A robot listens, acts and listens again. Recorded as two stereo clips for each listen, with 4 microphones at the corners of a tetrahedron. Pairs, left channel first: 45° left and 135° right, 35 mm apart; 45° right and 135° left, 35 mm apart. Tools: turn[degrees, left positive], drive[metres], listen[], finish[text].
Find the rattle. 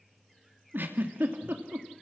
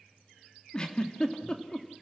Action: listen[]
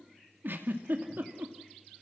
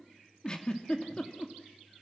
Action: listen[]
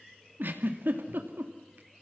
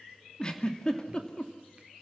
Action: finish[I can't make out a rattle, only a giggle.]